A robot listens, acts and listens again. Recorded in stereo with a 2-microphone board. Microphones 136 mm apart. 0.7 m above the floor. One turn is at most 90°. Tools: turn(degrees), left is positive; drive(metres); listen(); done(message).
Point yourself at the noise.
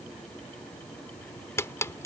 turn(degrees=20)
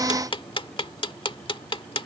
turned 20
turn(degrees=90)
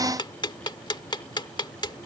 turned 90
turn(degrees=35)
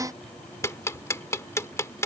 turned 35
turn(degrees=20)
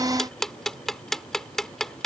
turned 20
done("Facing the ticking.")